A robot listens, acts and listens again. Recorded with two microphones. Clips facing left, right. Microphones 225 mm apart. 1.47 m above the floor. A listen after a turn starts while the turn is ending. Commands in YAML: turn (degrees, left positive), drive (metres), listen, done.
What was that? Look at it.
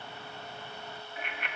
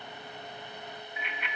turn: 45
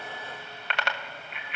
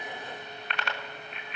turn: 90
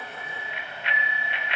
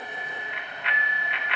turn: 30
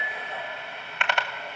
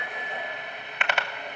done: "Facing the bicycle bell."